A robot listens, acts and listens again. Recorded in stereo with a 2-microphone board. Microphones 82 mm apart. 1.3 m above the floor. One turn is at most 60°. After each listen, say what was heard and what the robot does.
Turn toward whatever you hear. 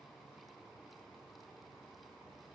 Keep listening.
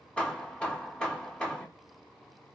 Turn 30° left.
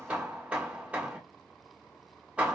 So it is at 15° right. Turn 15° right.
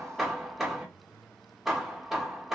Found it: hammering, straight ahead.